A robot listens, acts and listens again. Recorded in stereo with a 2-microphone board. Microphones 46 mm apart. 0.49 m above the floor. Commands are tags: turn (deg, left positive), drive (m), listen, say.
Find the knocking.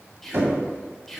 <turn deg="-60"/>
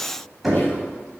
<say>Facing the knocking, 1 to 2 m away.</say>